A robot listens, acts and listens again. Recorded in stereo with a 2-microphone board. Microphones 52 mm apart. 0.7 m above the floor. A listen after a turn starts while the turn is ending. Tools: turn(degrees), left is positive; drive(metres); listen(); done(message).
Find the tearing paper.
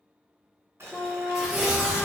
turn(degrees=-30)
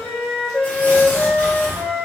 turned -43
turn(degrees=35)
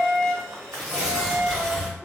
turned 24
turn(degrees=10)
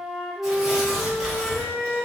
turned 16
done("Found it: tearing paper, straight ahead.")